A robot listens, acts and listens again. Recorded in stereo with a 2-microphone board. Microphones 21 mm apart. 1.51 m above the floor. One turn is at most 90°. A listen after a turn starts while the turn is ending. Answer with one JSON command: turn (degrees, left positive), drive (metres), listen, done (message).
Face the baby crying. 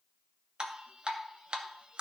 {"listen": true}
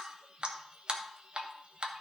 {"listen": true}
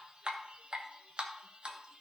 {"done": "I can't make out a baby crying, only dripping."}